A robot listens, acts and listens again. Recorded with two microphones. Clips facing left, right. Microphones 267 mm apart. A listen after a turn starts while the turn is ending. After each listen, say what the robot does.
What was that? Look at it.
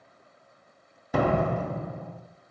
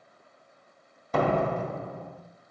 Turn 30° left.
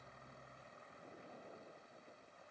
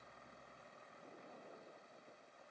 Keep listening.
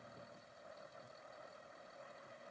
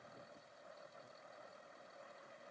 I heard a door slam, but can't make it out now. It was about 20° right or 140° left.